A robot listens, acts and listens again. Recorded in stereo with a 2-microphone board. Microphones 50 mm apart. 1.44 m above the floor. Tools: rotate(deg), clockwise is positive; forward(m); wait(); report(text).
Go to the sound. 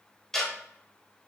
rotate(-30)
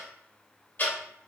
rotate(-140)
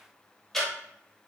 forward(1.0)
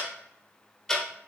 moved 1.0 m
forward(1.0)
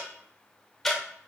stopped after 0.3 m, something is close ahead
report("I am next to the ticking.")